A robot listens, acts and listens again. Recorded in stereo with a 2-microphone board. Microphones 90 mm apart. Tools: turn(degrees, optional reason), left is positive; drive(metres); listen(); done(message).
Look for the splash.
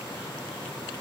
listen()
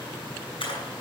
turn(degrees=70, reason="The splash: about 70° left or 110° left.")
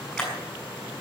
done("Facing the splash, over 4 m away.")